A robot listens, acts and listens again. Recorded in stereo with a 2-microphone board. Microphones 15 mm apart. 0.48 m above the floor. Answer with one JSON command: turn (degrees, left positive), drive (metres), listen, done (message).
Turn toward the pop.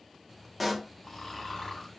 {"turn": 30}
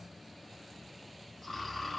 {"listen": true}
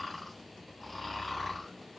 {"done": "I heard a pop, but can't make it out now. It was about 30° right or 150° left."}